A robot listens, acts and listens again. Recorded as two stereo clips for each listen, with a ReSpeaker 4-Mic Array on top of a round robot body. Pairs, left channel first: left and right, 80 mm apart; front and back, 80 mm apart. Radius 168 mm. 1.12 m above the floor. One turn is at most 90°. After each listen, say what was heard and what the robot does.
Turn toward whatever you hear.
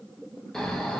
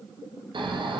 The snoring: 175° left. Turn 90° left.
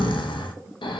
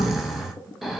The snoring is now 90° left. Turn 90° left.
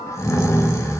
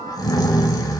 The snoring is now 40° left. Turn 40° left.
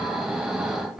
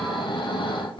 Facing the snoring, under 1 m away.